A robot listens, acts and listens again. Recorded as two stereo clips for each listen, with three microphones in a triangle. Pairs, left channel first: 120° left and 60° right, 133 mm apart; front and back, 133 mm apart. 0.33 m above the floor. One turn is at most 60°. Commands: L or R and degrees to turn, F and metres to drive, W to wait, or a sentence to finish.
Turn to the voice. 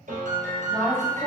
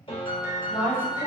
L35
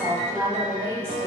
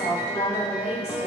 L10
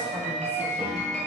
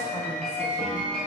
W
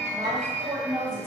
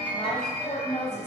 Facing the woman speaking, 1 to 2 m away.